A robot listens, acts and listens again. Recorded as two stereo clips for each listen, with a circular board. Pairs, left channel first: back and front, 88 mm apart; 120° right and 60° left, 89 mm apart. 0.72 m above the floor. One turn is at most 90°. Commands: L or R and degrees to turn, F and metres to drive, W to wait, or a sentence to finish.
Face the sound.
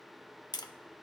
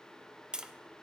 L90
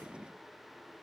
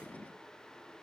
L50
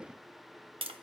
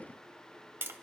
Facing the tapping, under 1 m away.